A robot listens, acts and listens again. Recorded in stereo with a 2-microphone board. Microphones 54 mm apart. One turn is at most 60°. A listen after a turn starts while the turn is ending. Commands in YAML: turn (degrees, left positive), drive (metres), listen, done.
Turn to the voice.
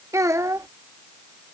turn: -60
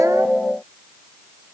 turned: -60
listen: true
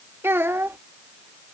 turn: -50
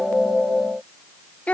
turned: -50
turn: 25
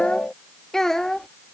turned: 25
done: "Found it: a child speaking, straight ahead."